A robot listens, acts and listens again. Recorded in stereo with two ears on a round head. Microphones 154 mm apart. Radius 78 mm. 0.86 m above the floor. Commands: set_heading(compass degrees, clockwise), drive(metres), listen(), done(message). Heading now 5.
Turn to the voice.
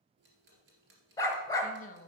set_heading(320)
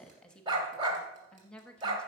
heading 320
done("Facing the woman speaking, 1 to 2 m away.")